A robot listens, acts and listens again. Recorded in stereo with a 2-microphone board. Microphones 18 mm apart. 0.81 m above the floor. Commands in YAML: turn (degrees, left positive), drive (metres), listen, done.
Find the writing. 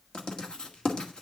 turn: 50
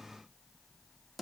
done: "Facing the writing."